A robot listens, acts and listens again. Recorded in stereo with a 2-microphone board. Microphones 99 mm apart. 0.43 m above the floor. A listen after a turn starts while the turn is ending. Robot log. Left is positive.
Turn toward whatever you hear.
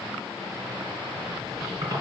note: The squeak: about 35° right or 145° right.
cmd yaw -35
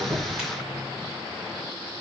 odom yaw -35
cmd idle
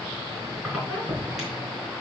end: Facing the squeak.